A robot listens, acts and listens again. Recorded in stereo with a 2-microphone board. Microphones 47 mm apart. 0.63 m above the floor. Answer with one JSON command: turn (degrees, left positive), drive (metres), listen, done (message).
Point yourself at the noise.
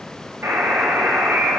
{"turn": -65}
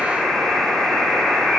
{"done": "Facing the buzzer, 2 to 4 m away."}